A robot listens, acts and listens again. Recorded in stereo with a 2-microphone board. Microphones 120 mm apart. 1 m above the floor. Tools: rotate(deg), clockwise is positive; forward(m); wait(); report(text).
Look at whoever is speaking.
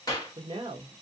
rotate(40)
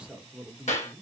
rotate(10)
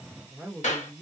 report("Found it: a woman speaking, straight ahead, 1 to 2 m away.")